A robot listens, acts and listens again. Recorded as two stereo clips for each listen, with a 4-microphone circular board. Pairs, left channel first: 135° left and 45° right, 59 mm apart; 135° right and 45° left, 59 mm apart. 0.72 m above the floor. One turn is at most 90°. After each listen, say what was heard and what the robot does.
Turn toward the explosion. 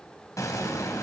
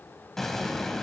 The explosion: 140° left. Turn 90° left.
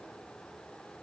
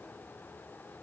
Nothing new. It was at 50° left. Turn 50° left.
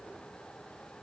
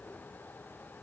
I heard an explosion from this way, but can't make it out now.